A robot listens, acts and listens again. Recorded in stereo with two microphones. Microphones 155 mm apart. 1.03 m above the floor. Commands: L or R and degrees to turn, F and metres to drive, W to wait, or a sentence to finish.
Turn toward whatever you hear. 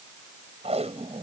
R40
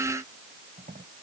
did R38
R100
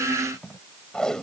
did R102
Facing the tape being pulled.